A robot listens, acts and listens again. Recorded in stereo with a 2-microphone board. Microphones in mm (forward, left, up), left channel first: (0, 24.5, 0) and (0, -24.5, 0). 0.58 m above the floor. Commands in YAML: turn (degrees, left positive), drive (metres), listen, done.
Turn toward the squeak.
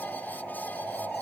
listen: true
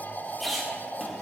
turn: 30
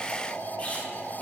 turn: 150
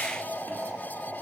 listen: true
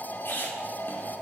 turn: 50
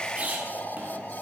turn: -30
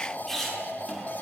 turn: 10
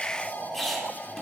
done: "Found it: a squeak, straight ahead, under 1 m away."